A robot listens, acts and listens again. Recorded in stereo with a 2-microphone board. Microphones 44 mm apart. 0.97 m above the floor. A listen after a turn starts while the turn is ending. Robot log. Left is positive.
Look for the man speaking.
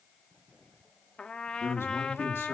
note: The man speaking: about 70° left or 110° left.
cmd yaw +70
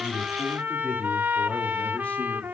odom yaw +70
cmd idle
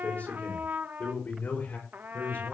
note: So it is at 40° left.
cmd yaw +40
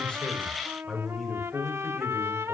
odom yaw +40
end: Found it: a man speaking, straight ahead.